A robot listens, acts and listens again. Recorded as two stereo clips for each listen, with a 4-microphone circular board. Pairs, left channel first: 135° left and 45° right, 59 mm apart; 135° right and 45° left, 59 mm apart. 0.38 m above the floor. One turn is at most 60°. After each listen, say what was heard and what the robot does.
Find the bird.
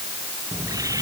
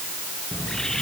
The bird: 55° right. Turn 55° right.
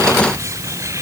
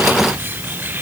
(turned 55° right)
The bird is now 15° right. Turn 15° right.
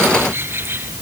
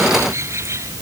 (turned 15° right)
Found it: a bird, straight ahead.